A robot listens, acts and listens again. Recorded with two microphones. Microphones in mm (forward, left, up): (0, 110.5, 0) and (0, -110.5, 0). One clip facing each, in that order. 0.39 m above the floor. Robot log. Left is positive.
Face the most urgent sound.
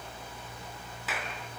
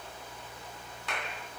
cmd idle
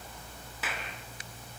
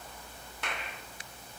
cmd idle
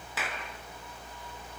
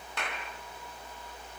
end: I can't make out anything urgent to turn to.